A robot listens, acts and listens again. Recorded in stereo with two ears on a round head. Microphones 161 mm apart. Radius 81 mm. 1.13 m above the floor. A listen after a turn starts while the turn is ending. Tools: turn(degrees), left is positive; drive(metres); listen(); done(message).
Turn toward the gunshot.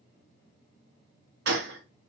turn(degrees=-70)
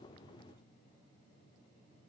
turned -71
listen()
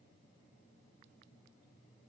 done("I heard a gunshot, but can't make it out now. It was about straight ahead or 40° right.")